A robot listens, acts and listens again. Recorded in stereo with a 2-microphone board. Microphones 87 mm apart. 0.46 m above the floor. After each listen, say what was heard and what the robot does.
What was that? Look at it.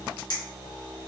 The clink: about 60° left or 120° left. Turn 60° left.
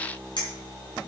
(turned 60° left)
So it is at 60° left. Turn 60° left.
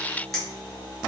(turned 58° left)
Facing the clink, 2 to 4 m away.